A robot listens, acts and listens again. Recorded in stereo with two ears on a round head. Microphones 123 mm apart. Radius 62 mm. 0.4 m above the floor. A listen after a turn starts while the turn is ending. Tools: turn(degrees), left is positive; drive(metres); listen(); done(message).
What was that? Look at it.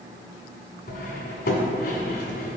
turn(degrees=90)
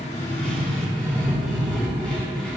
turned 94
done("Found it: cutlery clinking, straight ahead.")